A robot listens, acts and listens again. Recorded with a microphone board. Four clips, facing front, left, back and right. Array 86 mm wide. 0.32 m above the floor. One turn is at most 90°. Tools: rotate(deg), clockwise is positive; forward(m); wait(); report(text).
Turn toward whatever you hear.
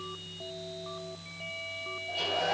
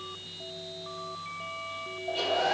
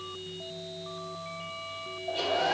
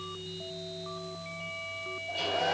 rotate(-90)
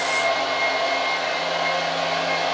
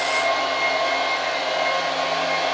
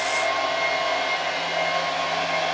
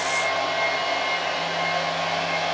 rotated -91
rotate(-35)
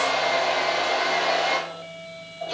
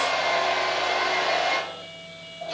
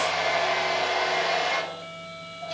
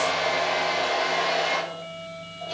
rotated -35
report("Found it: a hair dryer, straight ahead, 2 to 4 m away.")